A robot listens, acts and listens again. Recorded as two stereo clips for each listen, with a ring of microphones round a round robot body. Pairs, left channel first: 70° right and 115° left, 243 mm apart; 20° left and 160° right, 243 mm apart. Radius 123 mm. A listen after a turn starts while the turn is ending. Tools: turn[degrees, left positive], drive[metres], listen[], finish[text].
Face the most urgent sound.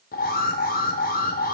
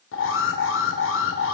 Thought: The alarm: 15° right.
Action: turn[-15]
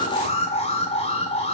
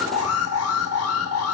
Action: finish[Facing the alarm.]